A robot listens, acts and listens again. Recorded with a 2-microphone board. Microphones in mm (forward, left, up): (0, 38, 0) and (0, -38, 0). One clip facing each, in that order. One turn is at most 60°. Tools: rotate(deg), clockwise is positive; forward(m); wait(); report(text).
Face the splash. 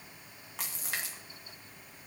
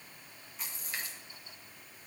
rotate(-60)
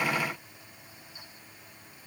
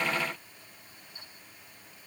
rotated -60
wait()
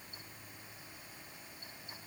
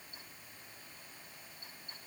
report("I heard a splash, but can't make it out now. It was about straight ahead or 60° left.")